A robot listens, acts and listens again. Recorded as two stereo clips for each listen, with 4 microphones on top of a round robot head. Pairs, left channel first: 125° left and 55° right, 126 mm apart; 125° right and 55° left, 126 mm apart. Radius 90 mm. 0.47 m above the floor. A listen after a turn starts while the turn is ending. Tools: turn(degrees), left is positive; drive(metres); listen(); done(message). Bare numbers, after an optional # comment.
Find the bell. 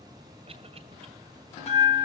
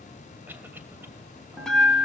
# The bell: 155° left.
turn(155)
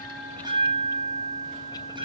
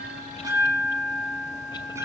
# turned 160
# The bell is now 10° right.
turn(-10)
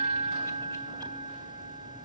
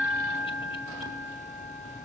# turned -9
done("Facing the bell, 1 to 2 m away.")